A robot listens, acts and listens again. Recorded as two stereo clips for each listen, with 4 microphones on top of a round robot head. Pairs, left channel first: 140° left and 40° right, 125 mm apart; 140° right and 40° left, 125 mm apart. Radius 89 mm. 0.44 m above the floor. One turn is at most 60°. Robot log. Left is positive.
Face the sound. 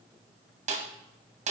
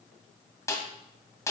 note: The snare drum: 70° right.
cmd yaw -60
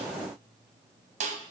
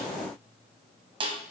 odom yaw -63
note: The snare drum is now 10° right.
cmd yaw -10
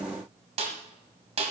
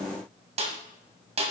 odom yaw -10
end: Facing the snare drum.